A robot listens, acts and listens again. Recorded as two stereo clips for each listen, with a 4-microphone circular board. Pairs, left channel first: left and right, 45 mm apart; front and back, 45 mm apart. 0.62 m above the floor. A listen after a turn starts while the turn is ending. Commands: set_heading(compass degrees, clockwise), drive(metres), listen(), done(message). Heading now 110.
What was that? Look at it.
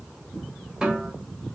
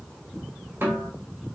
set_heading(275)
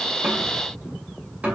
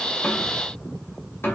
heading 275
set_heading(305)
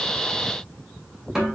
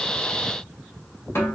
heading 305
done("Facing the snare drum, 1 to 2 m away.")